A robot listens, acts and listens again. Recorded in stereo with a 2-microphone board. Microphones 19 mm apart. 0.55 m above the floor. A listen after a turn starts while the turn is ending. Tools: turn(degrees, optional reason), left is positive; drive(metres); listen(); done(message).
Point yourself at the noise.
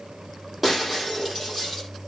turn(degrees=-30)
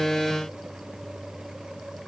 listen()
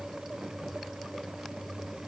done("I heard breaking glass, but can't make it out now. It was about 25° left or 145° right.")